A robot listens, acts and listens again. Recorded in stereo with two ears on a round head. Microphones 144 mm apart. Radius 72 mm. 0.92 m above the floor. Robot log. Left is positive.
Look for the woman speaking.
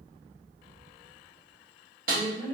note: The woman speaking: about 40° right or 140° right.
cmd yaw -40
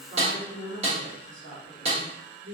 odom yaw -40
note: So it is at 100° right.
cmd yaw -100
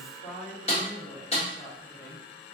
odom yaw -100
note: The woman speaking is now 15° left.
cmd yaw +15
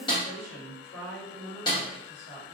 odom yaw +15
end: Facing the woman speaking.